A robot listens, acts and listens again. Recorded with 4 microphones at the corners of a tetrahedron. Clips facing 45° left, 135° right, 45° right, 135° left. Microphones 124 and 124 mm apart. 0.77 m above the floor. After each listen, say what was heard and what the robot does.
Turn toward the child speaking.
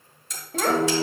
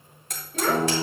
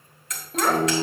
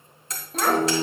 The child speaking: 45° left. Turn 45° left.
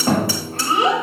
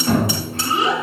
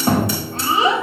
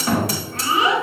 The child speaking is now 15° left. Turn 15° left.
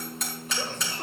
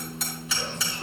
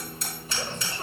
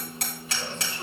Found it: a child speaking, straight ahead.